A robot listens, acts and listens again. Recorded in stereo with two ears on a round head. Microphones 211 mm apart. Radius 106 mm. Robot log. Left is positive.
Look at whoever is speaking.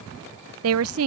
note: The woman speaking: about 70° right or 110° right.
cmd yaw -70
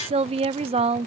note: So it is at 30° right.
cmd yaw -30
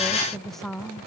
end: Facing the woman speaking.